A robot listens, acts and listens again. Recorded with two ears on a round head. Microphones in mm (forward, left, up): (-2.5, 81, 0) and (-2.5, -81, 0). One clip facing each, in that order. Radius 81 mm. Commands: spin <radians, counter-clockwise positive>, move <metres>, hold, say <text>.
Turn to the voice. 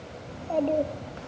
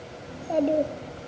spin -0.26
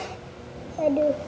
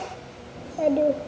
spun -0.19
spin -0.17
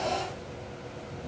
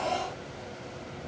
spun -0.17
hold
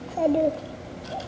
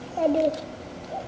say Facing the child speaking.